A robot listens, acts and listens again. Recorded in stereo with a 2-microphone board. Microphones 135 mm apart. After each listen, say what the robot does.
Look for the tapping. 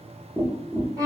Turn 30° right.
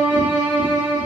Keep listening.
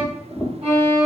Turn 20° left.
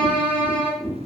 Found it: tapping, straight ahead, 1 to 2 m away.